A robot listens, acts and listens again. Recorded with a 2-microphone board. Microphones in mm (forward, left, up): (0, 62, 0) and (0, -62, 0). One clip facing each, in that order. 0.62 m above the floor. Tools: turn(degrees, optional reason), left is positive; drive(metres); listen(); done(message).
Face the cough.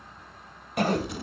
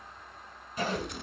turn(degrees=75, reason="The cough: about 75° left or 105° left.")
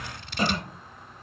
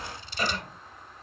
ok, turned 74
turn(degrees=25, reason="So it is at 25° left.")
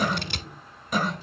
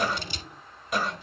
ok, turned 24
done("Found it: a cough, straight ahead, 2 to 4 m away.")